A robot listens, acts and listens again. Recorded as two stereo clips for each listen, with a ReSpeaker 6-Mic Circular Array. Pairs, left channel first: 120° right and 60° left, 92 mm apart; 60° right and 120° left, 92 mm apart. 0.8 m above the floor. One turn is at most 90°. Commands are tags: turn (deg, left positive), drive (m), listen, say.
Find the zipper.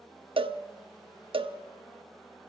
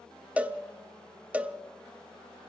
<listen/>
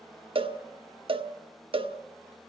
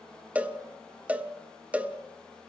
<listen/>
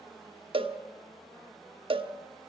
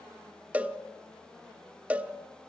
<say>I can't make out a zipper to turn to.</say>